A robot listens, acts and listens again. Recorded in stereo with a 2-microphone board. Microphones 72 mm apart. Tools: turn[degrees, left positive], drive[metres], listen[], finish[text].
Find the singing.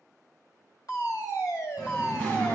Thought: The singing: about 25° left or 155° left.
Action: turn[25]
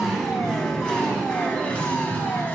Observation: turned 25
Thought: The singing: about 25° left or 155° left.
Action: turn[25]
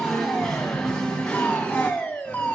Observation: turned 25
Thought: The singing: about 15° left or 165° left.
Action: turn[15]
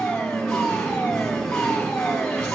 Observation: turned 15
Action: turn[30]
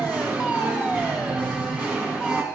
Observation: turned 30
Thought: So it is at 25° right.
Action: turn[-25]
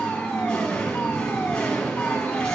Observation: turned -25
Thought: The singing is now 10° left.
Action: turn[10]
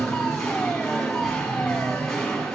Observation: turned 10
Action: finish[Facing the singing.]